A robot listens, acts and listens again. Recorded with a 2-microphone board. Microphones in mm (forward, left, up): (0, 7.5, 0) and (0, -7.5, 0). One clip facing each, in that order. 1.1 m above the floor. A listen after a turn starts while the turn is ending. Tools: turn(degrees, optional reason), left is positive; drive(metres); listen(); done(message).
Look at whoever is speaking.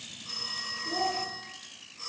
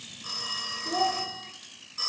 turn(degrees=-35, reason="The child speaking: about 35° right or 145° right.")
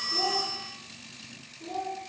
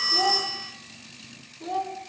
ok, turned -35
turn(degrees=-110, reason="So it is at 110° right.")
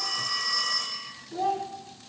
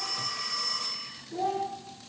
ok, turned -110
turn(degrees=20, reason="The child speaking is now 20° left.")
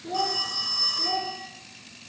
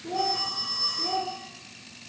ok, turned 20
done("Found it: a child speaking, straight ahead, 1 to 2 m away.")